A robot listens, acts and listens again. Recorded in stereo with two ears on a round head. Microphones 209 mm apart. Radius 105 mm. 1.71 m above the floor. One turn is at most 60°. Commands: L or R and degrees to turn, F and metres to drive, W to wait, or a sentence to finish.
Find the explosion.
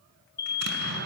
R45
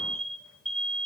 W
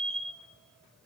I heard an explosion, but can't make it out now. It was about straight ahead or 90° right.